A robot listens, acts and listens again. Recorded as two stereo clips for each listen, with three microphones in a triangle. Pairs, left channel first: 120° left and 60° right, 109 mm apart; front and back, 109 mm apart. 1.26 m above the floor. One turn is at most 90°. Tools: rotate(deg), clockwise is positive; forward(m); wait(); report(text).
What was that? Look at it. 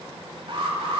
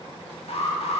rotate(25)
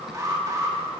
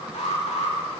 report("Facing the alarm.")